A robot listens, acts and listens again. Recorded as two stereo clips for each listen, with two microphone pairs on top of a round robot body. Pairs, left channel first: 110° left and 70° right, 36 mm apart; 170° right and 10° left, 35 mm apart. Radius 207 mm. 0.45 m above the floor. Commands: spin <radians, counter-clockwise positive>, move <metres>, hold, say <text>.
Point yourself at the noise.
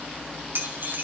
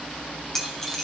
spin -1.66
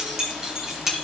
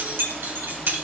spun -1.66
spin 0.17
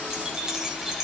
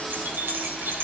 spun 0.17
spin 0.17
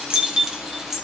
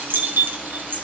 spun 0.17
spin 0.26
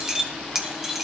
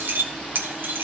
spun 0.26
spin 0.26
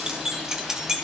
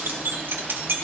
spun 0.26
spin 0.17
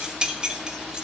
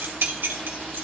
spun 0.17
say Found it: keys jangling, straight ahead, 2 to 4 m away.